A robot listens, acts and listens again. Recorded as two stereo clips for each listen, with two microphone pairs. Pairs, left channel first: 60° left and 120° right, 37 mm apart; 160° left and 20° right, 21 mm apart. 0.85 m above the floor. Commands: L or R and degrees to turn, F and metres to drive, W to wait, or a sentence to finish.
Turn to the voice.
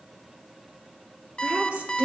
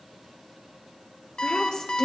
R170
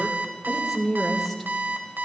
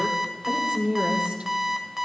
R25
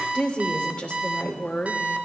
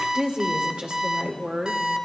Facing the woman speaking.